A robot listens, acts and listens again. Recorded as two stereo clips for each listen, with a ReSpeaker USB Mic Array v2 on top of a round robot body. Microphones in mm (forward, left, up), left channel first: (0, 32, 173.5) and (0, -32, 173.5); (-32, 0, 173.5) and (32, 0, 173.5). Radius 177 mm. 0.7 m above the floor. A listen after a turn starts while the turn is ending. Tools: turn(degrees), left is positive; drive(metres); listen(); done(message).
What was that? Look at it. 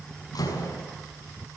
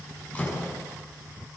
turn(degrees=110)
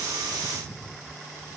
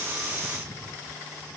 done("Facing where the door slam came from. I can't hear it now.")